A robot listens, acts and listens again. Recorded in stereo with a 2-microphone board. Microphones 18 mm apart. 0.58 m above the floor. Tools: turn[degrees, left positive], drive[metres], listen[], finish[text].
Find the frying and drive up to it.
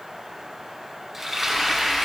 Thought: The frying: about 15° right or 165° right.
Action: turn[-15]
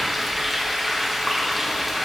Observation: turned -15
Action: drive[1.0]
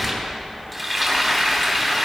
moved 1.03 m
Action: drive[1.0]
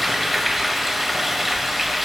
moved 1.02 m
Thought: The frying is now 10° right.
Action: turn[-10]
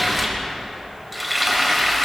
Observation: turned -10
Action: drive[1.0]
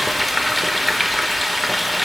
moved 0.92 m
Action: drive[1.0]
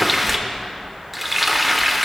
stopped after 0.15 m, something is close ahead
Action: finish[Arrived at the frying, straight ahead.]